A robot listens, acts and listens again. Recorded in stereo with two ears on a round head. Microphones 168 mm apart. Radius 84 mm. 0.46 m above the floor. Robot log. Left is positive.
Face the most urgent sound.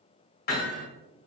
cmd idle
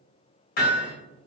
cmd idle
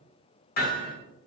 end: I can't make out anything urgent to turn to.